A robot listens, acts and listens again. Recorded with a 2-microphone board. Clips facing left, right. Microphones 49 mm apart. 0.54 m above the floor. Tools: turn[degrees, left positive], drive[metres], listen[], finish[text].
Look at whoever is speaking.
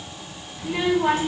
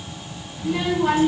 Action: turn[30]
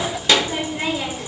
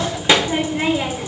Thought: So it is at 20° right.
Action: turn[-20]
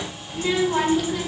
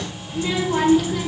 Action: finish[Found it: a child speaking, straight ahead, 1 to 2 m away.]